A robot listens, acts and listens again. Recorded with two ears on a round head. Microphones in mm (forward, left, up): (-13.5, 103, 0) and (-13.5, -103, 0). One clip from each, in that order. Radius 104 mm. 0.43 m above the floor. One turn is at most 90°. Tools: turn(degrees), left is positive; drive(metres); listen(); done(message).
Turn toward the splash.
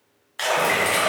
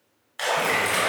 turn(degrees=30)
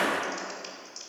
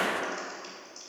listen()
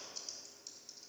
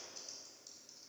done("I heard a splash, but can't make it out now. It was about 25° right or 145° left.")